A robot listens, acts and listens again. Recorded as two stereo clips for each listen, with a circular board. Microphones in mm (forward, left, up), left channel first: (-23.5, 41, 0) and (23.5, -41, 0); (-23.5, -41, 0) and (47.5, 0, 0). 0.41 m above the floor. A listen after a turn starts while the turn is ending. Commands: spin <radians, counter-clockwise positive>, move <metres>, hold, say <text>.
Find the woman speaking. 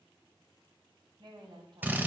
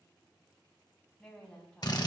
spin -1.31
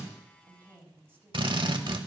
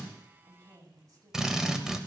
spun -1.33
say Facing the woman speaking.